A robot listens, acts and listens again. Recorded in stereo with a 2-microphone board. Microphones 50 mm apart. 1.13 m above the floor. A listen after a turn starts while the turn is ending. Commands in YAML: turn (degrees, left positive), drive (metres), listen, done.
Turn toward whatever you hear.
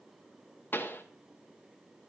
turn: 45
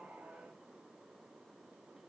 listen: true
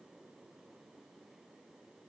done: "I heard a pop, but can't make it out now. It was about straight ahead or 90° left."